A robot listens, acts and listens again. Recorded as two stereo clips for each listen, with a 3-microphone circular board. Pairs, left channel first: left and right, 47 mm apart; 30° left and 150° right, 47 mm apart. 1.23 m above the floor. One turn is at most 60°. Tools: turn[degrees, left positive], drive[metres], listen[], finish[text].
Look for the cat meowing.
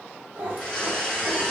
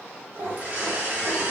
Thought: The cat meowing: 125° right.
Action: turn[-60]
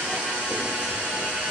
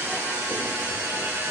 Thought: Nothing new. It was at 65° right.
Action: turn[-60]
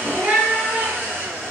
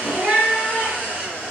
Thought: The cat meowing is now 105° right.
Action: turn[-60]
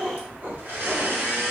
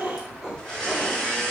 Thought: The cat meowing is now 85° right.
Action: turn[-60]
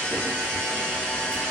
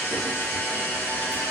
Thought: Nothing new. It was at 25° right.
Action: turn[-25]
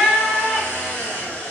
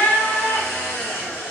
Thought: The cat meowing is now 10° right.
Action: turn[-10]
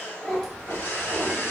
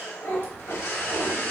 Action: finish[Facing the cat meowing, 1 to 2 m away.]